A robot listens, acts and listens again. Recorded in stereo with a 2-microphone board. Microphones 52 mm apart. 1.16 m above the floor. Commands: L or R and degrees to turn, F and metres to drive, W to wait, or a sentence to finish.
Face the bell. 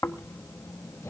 W
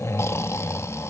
W
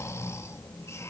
I can't make out a bell to turn to.